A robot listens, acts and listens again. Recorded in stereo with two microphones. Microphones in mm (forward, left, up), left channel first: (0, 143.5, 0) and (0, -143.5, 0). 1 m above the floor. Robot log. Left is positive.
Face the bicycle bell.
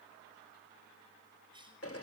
cmd idle
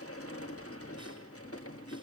cmd idle
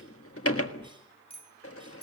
note: The bicycle bell: about 20° left or 160° left.
cmd yaw +20
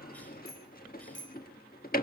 note: So it is at 140° left.
cmd yaw +140
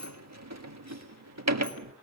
cmd idle
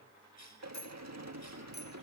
note: The bicycle bell is now 35° left.
cmd yaw +35
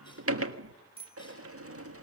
note: The bicycle bell is now 20° right.
cmd yaw -20
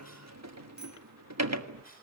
cmd idle
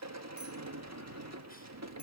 cmd idle
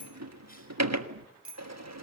end: Found it: a bicycle bell, straight ahead, 2 to 4 m away.